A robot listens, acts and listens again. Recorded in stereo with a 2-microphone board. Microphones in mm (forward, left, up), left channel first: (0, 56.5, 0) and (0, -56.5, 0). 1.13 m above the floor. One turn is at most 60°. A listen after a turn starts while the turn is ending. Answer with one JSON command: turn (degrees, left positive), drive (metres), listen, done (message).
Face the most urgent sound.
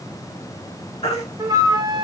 {"turn": 60}
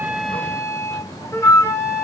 {"listen": true}
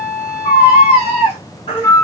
{"turn": 55}
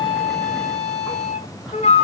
{"listen": true}
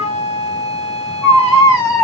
{"done": "Found it: a baby crying, straight ahead."}